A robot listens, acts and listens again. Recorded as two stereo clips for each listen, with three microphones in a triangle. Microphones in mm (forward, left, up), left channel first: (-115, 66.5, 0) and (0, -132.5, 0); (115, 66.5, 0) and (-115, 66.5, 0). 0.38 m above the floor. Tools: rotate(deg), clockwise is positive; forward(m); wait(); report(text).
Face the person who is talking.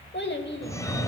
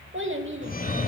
rotate(-155)
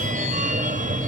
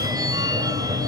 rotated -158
wait()
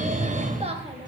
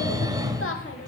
report("Facing the child speaking, under 1 m away.")